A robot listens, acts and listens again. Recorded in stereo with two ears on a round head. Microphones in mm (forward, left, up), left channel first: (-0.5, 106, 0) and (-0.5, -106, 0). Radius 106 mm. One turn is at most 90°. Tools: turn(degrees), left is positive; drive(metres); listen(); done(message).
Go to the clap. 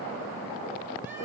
listen()
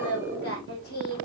listen()
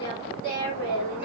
done("I can't make out a clap, only singing.")